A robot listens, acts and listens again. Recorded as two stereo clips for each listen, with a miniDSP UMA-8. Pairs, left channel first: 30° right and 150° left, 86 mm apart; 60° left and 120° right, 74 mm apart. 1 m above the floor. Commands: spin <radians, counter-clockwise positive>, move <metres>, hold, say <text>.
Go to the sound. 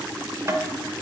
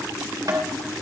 spin -2.71
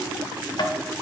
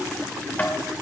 move 1.0
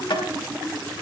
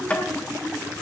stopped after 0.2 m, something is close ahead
spin -0.17
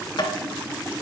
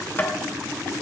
say Something is in my way. I am facing the tapping but have not reached it.